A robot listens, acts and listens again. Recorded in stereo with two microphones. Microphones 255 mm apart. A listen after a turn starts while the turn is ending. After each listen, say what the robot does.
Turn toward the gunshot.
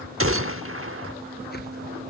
Turn 55° right.
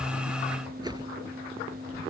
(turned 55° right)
Keep listening.
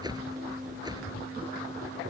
I heard a gunshot, but can't make it out now. It was about straight ahead or 70° right.